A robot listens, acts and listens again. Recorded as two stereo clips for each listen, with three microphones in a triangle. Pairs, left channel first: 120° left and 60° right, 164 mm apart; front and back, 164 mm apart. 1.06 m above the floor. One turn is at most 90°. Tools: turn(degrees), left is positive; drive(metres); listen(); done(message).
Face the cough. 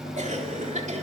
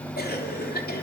turn(degrees=-15)
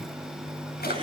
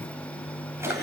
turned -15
listen()
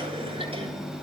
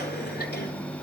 listen()
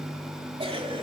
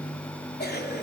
done("Found it: a cough, straight ahead.")